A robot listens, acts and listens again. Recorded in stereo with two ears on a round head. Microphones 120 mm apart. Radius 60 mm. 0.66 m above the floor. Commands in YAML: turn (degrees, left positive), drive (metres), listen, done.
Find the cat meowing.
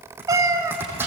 turn: -20
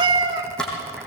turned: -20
turn: -30
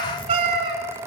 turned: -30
turn: -140
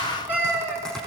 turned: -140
turn: -15
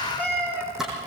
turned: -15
turn: -10
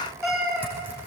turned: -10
done: "Facing the cat meowing, over 4 m away."